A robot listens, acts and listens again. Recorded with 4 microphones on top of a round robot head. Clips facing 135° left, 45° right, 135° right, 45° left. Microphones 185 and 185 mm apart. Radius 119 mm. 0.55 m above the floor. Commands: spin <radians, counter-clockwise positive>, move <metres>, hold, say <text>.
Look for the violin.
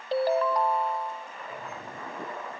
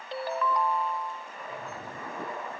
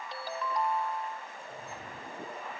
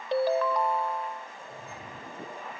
hold
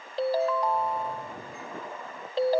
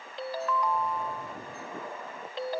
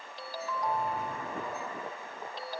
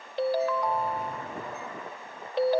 hold
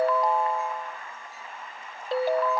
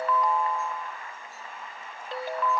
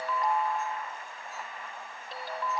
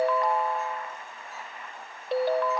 say I can't make out a violin to turn to.